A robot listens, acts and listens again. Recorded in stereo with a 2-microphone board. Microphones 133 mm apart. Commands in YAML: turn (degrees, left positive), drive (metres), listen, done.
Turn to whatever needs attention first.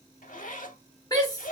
turn: 25
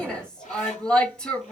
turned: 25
turn: 10
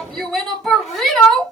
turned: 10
done: "Facing the shout, 1 to 2 m away."